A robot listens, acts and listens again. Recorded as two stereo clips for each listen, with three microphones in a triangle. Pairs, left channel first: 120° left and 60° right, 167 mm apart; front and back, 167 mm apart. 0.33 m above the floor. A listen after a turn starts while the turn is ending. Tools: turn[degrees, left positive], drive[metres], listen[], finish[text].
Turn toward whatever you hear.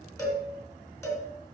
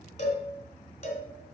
Thought: The cowbell: 45° left.
Action: turn[45]
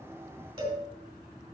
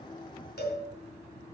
Action: finish[Facing the cowbell, 2 to 4 m away.]